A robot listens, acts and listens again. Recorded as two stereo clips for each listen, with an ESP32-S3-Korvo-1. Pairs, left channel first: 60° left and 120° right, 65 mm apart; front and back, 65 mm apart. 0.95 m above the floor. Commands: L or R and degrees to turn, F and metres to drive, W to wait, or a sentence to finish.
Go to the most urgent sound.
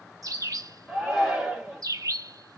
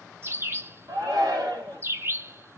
L155
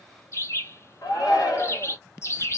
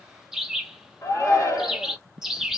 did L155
L25
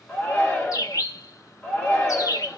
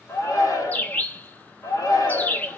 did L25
R10
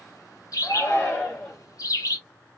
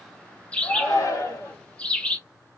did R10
F1.0
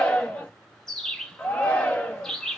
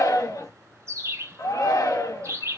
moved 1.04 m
R10
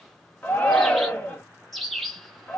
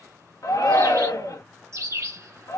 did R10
F1.0
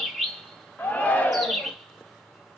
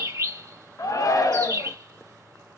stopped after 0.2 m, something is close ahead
Arrived at the shout, straight ahead.